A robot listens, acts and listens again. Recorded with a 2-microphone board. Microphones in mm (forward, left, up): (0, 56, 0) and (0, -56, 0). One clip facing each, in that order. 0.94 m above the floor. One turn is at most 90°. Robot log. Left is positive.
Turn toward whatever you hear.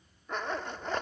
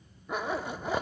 cmd yaw -30
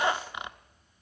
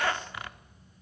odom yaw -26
note: So it is at 20° left.
cmd yaw +20
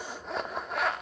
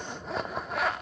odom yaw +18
end: Found it: a zipper, straight ahead.